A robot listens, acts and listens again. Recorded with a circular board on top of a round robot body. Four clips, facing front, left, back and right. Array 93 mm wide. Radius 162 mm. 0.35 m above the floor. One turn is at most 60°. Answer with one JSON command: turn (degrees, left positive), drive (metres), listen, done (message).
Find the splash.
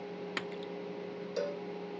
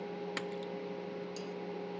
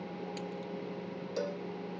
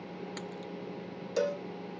{"turn": 20}
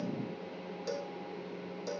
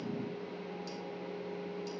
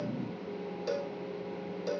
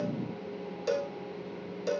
{"done": "I heard a splash from this way, but can't make it out now."}